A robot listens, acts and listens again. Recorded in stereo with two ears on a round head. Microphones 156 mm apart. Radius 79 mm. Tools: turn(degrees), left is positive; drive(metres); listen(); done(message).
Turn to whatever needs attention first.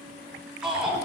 turn(degrees=-30)
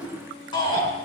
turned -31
turn(degrees=30)
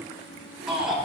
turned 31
done("Facing the shout.")